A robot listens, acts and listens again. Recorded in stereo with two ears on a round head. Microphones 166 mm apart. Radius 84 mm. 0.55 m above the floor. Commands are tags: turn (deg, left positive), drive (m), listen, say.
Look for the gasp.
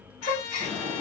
<turn deg="40"/>
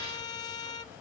<listen/>
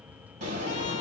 <say>I heard a gasp, but can't make it out now. It was about straight ahead or 100° left.</say>